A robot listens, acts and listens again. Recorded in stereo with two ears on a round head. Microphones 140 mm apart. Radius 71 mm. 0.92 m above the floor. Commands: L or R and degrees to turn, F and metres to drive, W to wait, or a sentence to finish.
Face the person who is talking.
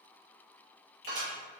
W
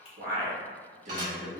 R45
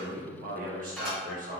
R55
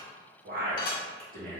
R65
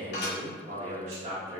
R40
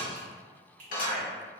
R25
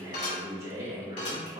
R20
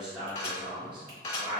Found it: a man speaking, straight ahead.